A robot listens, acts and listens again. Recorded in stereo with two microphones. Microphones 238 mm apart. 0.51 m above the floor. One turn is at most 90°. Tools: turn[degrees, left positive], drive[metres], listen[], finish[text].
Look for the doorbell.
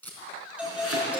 Action: turn[-30]
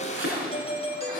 Thought: So it is at 30° left.
Action: turn[30]
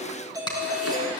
Thought: The doorbell is now 15° right.
Action: turn[-15]
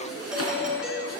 Action: finish[Facing the doorbell, 2 to 4 m away.]